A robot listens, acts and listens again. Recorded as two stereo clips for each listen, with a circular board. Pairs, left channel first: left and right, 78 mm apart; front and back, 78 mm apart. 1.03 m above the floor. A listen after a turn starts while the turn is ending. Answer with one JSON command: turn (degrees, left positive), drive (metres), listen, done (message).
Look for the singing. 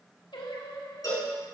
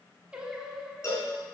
{"turn": 95}
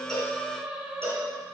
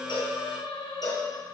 {"turn": -15}
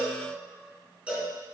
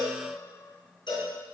{"listen": true}
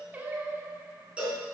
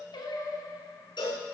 {"turn": -30}
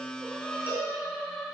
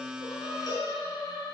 {"done": "Facing the singing, 1 to 2 m away."}